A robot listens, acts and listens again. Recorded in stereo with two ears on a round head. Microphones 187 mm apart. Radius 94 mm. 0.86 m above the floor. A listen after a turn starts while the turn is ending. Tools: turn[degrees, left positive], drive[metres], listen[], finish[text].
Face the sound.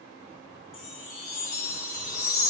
Thought: The chime: about 35° left or 145° left.
Action: turn[35]
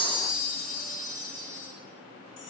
Thought: So it is at 105° left.
Action: turn[105]
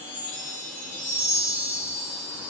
Thought: The chime is now 15° right.
Action: turn[-15]
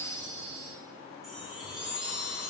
Action: finish[Found it: a chime, straight ahead, 1 to 2 m away.]